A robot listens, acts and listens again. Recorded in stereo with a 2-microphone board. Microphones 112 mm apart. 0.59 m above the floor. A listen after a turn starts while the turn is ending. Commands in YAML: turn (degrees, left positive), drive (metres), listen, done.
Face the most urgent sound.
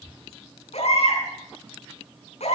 turn: 90
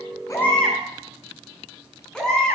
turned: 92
done: "Found it: a baby crying, straight ahead, over 4 m away."